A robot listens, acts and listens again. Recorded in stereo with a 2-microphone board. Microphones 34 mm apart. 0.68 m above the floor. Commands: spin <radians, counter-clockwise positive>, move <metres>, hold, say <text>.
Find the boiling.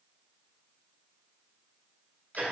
hold
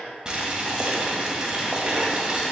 spin -0.44
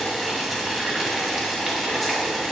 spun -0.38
say Facing the boiling, 1 to 2 m away.